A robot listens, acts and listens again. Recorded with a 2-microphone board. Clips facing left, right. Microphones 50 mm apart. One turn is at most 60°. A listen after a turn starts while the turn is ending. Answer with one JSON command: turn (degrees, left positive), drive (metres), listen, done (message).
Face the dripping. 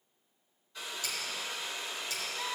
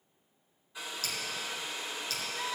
{"turn": 20}
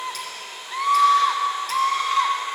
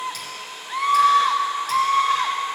{"listen": true}
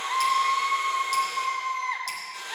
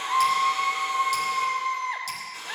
{"listen": true}
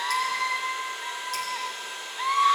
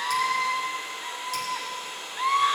{"done": "I heard dripping, but can't make it out now. It was about straight ahead or 140° left."}